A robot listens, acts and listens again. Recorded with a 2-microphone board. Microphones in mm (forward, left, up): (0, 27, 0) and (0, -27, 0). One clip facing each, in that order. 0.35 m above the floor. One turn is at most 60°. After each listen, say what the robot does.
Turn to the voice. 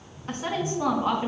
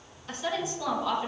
Turn 35° left.
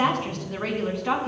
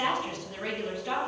Turn 60° left.
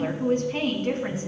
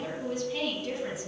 Turn 50° left.
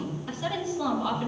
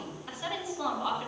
Found it: a woman speaking, straight ahead, 2 to 4 m away.